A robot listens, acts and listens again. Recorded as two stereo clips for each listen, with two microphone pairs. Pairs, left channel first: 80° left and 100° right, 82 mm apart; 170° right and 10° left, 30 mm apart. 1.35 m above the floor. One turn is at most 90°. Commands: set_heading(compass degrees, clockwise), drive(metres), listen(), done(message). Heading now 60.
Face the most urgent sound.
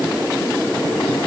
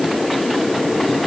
listen()
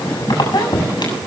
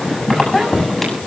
listen()
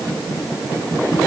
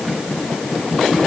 done("I can't make out anything urgent to turn to.")